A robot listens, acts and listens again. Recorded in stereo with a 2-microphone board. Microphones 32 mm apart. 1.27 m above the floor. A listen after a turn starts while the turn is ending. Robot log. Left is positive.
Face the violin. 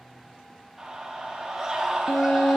cmd yaw +90
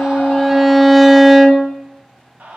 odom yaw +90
end: Found it: a violin, straight ahead, under 1 m away.